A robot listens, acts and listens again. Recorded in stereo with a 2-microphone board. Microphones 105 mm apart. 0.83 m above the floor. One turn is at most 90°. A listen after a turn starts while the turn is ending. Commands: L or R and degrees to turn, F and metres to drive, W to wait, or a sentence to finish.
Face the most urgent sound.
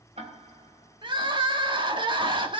R50
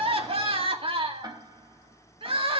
R75
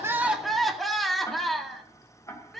Facing the crying.